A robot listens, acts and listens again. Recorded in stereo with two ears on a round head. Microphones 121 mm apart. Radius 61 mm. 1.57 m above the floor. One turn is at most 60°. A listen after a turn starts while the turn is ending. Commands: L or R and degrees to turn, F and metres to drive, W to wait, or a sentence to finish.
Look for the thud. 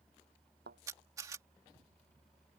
R60
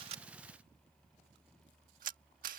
R30
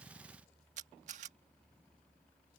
I heard a thud from this way, but can't make it out now.